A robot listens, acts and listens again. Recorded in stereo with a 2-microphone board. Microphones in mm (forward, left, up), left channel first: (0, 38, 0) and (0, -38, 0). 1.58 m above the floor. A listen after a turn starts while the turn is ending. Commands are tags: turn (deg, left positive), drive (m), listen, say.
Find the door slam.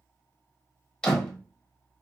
<turn deg="30"/>
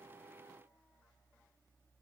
<listen/>
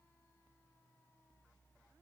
<say>I heard a door slam, but can't make it out now. It was about 20° right or 140° left.</say>